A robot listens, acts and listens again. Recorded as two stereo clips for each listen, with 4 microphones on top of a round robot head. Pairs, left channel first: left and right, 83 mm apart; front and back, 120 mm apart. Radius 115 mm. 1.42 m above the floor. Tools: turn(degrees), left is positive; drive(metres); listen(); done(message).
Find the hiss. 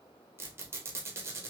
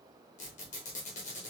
listen()
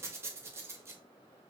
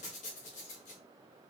listen()
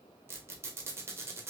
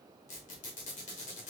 done("I can't make out a hiss, only a squeak.")